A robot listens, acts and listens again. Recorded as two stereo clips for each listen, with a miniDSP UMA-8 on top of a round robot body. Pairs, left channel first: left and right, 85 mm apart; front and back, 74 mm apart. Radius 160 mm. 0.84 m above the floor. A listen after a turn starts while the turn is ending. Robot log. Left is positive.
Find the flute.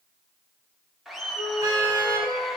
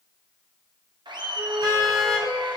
note: The flute: 130° left.
cmd yaw +130
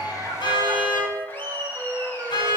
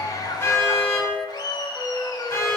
note: The flute is now 30° right.
cmd yaw -30
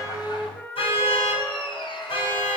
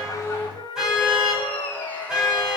note: The flute is now 15° left.
cmd yaw +15
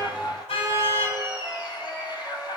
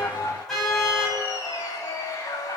cmd idle
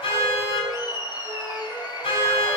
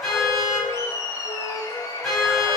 cmd idle
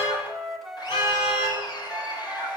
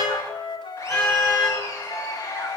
end: Found it: a flute, straight ahead.